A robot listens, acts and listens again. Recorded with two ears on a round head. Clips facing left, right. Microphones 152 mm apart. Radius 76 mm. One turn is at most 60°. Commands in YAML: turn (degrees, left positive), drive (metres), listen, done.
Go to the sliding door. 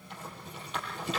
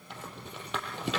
listen: true
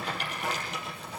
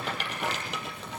listen: true
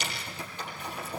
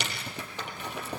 done: "I can't make out a sliding door, only a rattle."